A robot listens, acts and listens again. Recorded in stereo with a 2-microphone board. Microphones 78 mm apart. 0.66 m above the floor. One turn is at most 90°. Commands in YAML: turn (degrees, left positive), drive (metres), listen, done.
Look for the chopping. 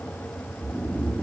listen: true
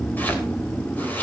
turn: 25
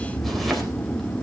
listen: true
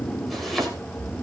done: "Facing the chopping, 2 to 4 m away."